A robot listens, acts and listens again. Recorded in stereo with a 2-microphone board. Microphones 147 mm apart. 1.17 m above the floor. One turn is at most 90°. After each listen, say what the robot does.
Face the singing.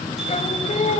Turn 50° left.
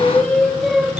Facing the singing, 1 to 2 m away.